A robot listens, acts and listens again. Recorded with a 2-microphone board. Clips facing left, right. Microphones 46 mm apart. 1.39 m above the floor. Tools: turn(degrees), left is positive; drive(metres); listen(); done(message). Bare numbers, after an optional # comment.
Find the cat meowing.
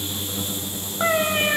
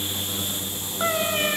# The cat meowing: about 15° left or 165° left.
turn(15)
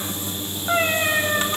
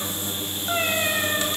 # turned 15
# The cat meowing: about 15° left or 165° left.
turn(15)
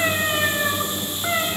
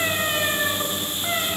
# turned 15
turn(30)
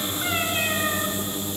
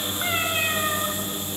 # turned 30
listen()
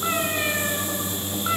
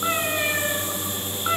# So it is at 15° right.
turn(-15)
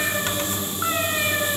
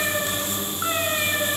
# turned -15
done("Found it: a cat meowing, straight ahead, 2 to 4 m away.")